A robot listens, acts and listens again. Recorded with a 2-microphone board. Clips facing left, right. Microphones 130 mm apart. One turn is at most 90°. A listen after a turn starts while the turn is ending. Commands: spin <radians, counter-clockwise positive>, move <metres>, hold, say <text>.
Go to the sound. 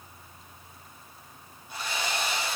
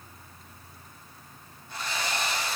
spin 0.52
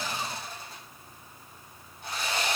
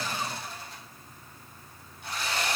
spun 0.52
spin 1.57
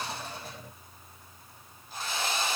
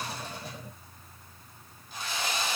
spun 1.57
spin 0.70
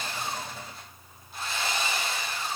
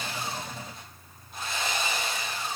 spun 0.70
move 1.0
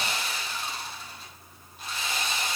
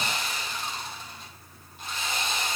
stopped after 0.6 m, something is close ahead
say Blocked. The sawing is further on, straight ahead.